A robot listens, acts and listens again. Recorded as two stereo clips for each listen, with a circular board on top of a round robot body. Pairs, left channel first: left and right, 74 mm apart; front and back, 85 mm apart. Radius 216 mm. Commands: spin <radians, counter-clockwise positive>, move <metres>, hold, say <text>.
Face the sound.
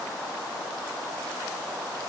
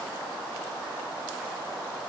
hold
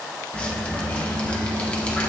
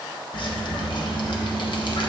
spin 0.26
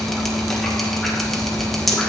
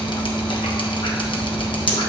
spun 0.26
say Found it: dripping, straight ahead.